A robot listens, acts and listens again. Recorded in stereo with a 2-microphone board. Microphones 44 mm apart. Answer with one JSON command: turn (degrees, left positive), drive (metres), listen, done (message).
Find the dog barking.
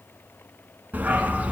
{"turn": -30}
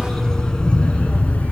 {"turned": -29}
{"turn": 40}
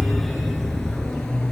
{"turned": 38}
{"turn": 20}
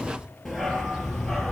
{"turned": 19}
{"turn": 10}
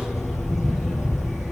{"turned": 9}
{"done": "Facing the dog barking, 2 to 4 m away."}